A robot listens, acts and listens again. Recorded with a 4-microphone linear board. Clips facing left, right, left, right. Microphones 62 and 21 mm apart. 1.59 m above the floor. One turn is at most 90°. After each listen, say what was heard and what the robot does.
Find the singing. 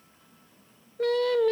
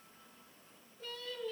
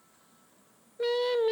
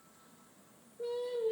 The singing: about 70° left or 110° left. Turn 70° left.
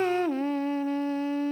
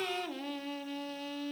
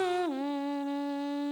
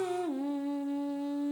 So it is at 35° left. Turn 35° left.
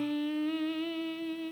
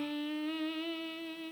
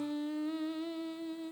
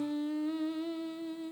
Facing the singing.